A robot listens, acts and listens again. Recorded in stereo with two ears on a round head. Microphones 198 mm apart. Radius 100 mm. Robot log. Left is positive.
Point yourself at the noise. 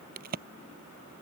note: The crack: about 40° right or 140° right.
cmd yaw -40
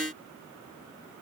cmd idle
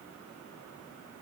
end: I heard a crack, but can't make it out now. It was about straight ahead or 100° right.